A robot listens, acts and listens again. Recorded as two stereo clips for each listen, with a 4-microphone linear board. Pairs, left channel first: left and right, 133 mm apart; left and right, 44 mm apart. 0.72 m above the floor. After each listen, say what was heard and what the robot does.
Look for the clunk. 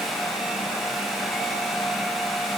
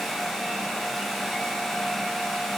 Keep listening.
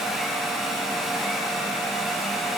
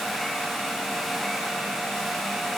Keep listening.
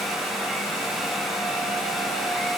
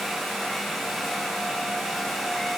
I can't make out a clunk to turn to.